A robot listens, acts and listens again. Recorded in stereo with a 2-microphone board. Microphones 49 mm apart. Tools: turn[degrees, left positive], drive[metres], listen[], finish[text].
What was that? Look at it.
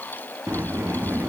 Thought: The sliding door: about 65° right or 115° right.
Action: turn[-65]
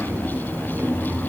Thought: So it is at 50° right.
Action: turn[-50]
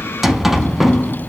Action: finish[Facing the sliding door, under 1 m away.]